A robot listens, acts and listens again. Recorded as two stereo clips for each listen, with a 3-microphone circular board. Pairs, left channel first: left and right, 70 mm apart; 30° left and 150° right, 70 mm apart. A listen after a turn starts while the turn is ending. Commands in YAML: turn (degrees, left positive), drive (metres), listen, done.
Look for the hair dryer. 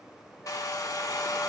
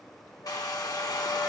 turn: 55
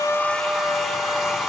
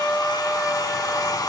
done: "Found it: a hair dryer, straight ahead, 1 to 2 m away."